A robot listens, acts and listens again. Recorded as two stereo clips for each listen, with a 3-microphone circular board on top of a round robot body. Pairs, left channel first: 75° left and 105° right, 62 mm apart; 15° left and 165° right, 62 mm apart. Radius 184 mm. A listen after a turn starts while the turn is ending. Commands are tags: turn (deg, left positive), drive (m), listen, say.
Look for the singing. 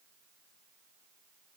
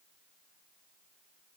<listen/>
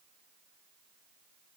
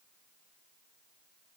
<listen/>
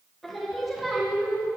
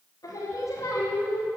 <turn deg="-15"/>
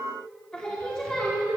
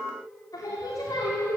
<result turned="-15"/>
<say>Facing the singing.</say>